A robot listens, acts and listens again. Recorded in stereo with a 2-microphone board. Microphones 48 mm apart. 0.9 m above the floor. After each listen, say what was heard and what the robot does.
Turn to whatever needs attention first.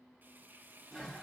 Keep listening.
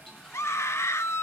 The scream: about 65° left or 115° left. Turn 65° left.
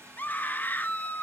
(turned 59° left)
So it is at 40° left. Turn 40° left.
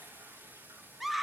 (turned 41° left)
Found it: a scream, straight ahead, 1 to 2 m away.